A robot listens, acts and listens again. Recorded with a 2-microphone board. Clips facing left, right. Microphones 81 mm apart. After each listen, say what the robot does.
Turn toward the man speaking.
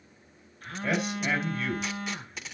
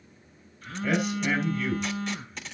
Turn 35° left.
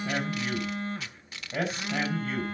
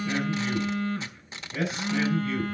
Turn 110° left.
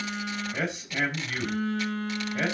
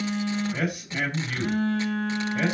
Facing the man speaking, over 4 m away.